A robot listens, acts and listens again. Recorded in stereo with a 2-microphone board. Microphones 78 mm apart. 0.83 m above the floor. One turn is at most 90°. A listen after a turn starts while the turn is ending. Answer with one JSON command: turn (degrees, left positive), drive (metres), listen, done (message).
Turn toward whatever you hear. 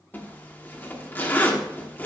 {"turn": 25}
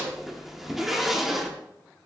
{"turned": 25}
{"done": "Found it: a zipper, straight ahead, 1 to 2 m away."}